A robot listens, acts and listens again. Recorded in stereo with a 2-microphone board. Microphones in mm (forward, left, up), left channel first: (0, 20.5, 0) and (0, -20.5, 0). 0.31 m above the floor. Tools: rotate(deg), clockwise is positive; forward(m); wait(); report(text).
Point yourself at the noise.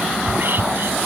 rotate(60)
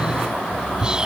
rotate(25)
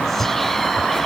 rotate(-10)
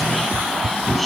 report("Found it: whispering, straight ahead.")